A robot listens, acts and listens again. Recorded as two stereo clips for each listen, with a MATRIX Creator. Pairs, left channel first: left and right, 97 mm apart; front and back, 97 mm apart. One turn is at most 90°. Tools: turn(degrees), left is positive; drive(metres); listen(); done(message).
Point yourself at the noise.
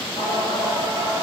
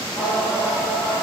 turn(degrees=90)
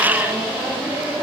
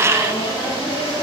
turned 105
turn(degrees=-15)
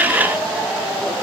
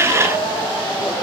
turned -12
done("Found it: singing, straight ahead, over 4 m away.")